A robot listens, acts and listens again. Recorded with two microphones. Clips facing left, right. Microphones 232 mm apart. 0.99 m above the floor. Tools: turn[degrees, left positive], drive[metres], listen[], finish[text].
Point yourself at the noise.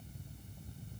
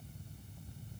Action: listen[]
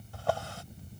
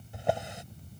Thought: The drawer: about 20° right or 160° right.
Action: turn[-20]
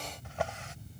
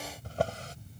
Thought: So it is at 140° right.
Action: turn[-140]
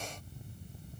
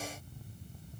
Action: listen[]
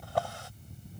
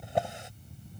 Thought: The drawer is now 20° right.
Action: turn[-20]
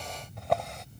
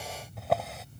Action: finish[Facing the drawer.]